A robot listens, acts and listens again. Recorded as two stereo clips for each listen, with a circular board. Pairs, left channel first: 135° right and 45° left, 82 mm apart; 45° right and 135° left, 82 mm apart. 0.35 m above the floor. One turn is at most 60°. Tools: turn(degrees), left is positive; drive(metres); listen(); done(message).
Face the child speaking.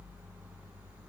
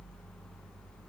listen()
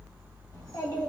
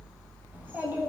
turn(degrees=-60)
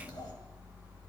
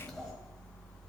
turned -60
turn(degrees=-60)
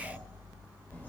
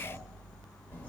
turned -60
turn(degrees=-45)
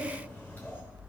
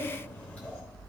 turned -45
turn(degrees=-60)
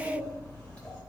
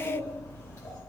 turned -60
turn(degrees=-60)
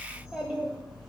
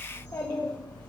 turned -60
turn(degrees=-30)
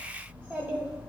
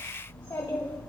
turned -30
done("Found it: a child speaking, straight ahead.")